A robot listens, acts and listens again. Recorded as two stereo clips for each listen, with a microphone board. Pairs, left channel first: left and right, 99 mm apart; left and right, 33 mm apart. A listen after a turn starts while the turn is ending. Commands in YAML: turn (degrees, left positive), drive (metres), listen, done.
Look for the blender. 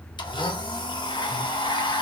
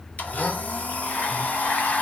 turn: 50
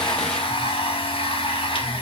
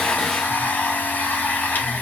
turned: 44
turn: 80
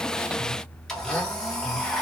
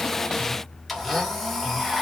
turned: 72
done: "Found it: a blender, straight ahead."